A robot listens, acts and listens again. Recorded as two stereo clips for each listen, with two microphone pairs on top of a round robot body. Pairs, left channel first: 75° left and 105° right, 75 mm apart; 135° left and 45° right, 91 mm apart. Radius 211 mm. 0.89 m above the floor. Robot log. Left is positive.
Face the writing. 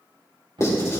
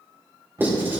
note: The writing: 25° left.
cmd yaw +25
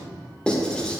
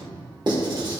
end: Facing the writing, 2 to 4 m away.